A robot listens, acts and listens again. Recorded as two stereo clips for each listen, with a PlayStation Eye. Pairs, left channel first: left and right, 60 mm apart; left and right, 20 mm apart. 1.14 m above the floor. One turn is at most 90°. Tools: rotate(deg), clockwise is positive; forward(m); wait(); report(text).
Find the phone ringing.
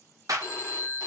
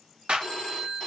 rotate(-60)
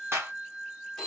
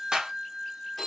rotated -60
report("Facing the phone ringing, 1 to 2 m away.")